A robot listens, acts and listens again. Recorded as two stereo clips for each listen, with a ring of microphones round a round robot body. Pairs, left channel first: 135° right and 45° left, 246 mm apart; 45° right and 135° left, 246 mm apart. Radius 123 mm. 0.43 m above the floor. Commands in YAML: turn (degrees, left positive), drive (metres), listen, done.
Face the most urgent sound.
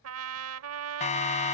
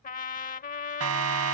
turn: 165
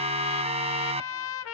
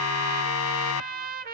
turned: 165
turn: -20
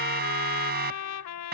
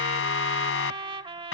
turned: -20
done: "Facing the siren."